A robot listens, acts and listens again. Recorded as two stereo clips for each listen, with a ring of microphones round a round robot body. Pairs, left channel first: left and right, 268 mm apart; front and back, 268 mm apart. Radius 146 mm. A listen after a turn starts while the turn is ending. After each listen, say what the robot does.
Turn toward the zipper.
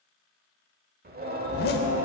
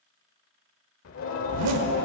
Turn 145° left.
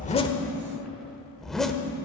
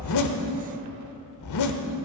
Found it: a zipper, straight ahead.